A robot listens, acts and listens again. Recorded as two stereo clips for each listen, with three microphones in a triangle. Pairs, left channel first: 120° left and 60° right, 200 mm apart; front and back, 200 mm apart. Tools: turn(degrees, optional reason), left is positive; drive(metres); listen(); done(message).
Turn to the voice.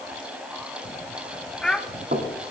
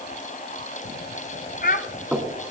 turn(degrees=30, reason="The child speaking: 30° left.")
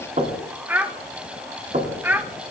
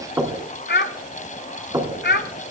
turn(degrees=20, reason="The child speaking is now 20° left.")
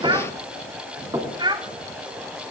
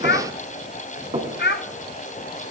done("Facing the child speaking.")